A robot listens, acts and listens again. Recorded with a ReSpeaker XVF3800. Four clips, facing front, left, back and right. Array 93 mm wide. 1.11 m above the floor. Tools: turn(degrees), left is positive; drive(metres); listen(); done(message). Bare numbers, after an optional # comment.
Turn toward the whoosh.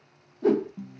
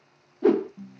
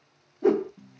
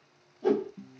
# The whoosh: 105° left.
turn(105)
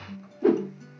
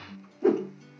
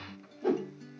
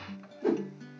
# The whoosh is now 25° left.
turn(25)
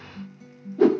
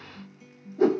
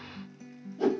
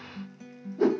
done("Facing the whoosh, under 1 m away.")